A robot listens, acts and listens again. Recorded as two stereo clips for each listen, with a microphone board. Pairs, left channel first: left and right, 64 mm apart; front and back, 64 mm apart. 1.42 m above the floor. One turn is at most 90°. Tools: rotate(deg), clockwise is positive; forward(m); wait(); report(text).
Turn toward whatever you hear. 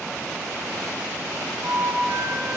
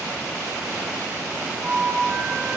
rotate(90)
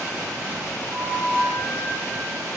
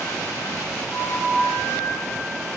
rotate(25)
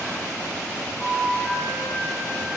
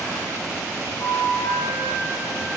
rotate(-15)
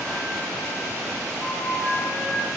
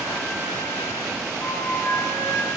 report("Facing the flute, 1 to 2 m away.")